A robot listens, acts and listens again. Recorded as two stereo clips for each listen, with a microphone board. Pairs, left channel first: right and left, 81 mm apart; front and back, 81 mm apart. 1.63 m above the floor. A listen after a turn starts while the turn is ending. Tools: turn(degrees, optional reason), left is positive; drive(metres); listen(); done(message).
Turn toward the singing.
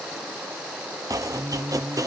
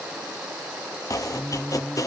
turn(degrees=75, reason="The singing: 75° left.")
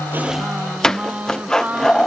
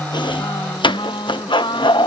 turn(degrees=15, reason="The singing is now 15° left.")
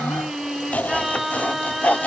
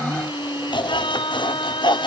done("Found it: singing, straight ahead.")